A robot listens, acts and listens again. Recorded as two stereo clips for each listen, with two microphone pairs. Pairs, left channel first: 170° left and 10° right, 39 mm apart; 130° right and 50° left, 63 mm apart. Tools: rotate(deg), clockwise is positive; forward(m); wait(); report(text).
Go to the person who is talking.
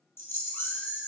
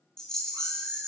wait()
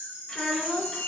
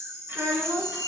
rotate(-100)
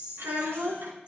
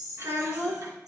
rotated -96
forward(1.0)
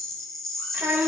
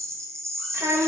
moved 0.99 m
rotate(-10)
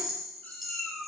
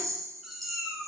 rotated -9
wait()
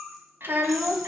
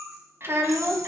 forward(1.0)
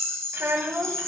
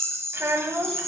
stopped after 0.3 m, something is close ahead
report("Arrived at the child speaking, straight ahead.")